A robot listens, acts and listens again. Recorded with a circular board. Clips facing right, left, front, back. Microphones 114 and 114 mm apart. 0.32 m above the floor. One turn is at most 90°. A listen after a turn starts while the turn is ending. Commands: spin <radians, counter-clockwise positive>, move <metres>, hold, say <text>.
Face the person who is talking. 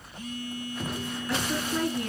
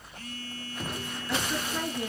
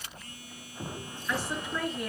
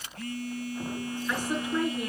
spin -1.57
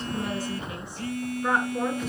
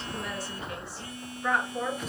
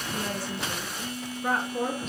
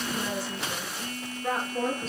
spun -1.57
spin -0.35
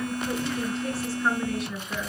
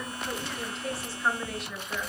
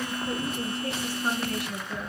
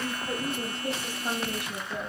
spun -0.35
say Facing the woman speaking.